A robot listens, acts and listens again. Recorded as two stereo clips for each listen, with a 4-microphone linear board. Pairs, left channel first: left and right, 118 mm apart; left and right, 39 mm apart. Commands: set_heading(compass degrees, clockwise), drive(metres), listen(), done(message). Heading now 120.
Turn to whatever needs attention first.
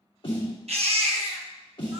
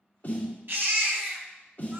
set_heading(180)
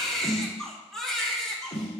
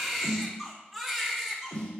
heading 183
done("Found it: a baby crying, straight ahead, under 1 m away.")